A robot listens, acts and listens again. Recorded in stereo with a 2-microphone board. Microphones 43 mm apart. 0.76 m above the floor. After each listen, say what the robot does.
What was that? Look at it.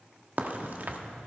Turn 45° right.
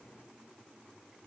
Keep listening.
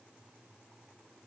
I heard a crack, but can't make it out now. It was about straight ahead or 90° right.